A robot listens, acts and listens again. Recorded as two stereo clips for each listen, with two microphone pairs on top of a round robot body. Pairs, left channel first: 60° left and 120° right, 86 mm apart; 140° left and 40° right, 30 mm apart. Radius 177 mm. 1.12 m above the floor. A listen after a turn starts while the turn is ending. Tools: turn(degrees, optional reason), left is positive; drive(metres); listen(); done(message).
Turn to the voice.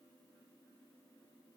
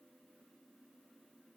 listen()
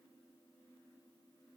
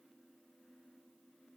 listen()
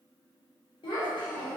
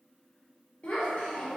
turn(degrees=90, reason="The child speaking: 90° left.")
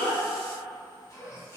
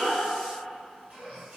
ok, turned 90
listen()
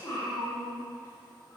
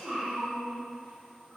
done("Facing the child speaking.")